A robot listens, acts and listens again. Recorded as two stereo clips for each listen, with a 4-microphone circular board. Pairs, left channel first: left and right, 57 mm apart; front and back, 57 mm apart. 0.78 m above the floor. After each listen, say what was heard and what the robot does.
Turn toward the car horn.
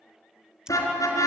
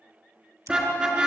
The car horn: 110° left. Turn 110° left.
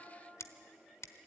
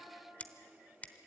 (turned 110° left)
Keep listening.
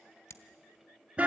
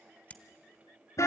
The car horn is now 20° right. Turn 20° right.
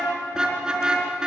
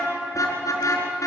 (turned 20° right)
Facing the car horn.